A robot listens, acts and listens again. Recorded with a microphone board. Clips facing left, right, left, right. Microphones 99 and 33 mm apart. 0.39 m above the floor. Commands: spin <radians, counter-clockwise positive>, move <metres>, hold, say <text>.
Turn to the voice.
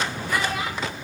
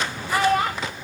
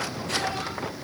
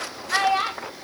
spin -0.87
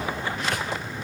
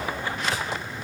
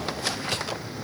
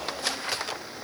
hold
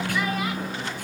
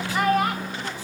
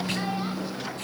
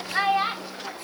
spin -1.13
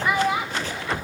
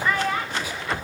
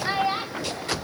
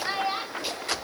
spin 0.26
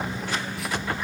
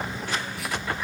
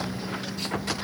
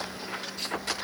hold
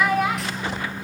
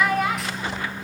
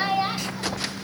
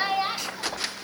say Found it: a child speaking, straight ahead.